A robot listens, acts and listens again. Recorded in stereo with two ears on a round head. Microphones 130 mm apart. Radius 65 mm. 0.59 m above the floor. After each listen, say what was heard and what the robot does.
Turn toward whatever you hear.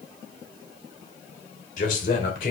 The man speaking: about 60° left or 120° left. Turn 60° left.
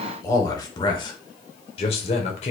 So it is at 50° left. Turn 50° left.
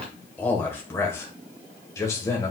The man speaking is now 20° left. Turn 20° left.
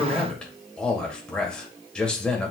Found it: a man speaking, straight ahead.